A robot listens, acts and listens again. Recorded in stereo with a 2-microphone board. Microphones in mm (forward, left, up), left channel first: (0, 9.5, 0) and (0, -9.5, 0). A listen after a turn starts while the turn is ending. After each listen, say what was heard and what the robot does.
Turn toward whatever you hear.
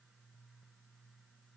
Keep listening.
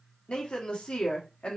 The woman speaking: about 70° left or 110° left. Turn 70° left.
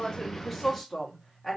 Found it: a woman speaking, straight ahead.